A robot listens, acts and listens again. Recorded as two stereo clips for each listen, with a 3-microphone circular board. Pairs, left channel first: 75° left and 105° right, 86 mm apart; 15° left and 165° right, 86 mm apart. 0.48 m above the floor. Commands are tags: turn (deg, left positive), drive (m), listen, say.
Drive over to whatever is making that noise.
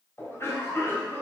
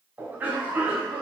<turn deg="130"/>
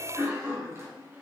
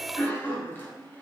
<turn deg="-45"/>
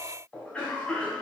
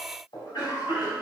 <drive m="1.0"/>
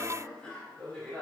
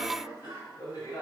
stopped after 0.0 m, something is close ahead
<say>Blocked. The cough is further on, straight ahead.</say>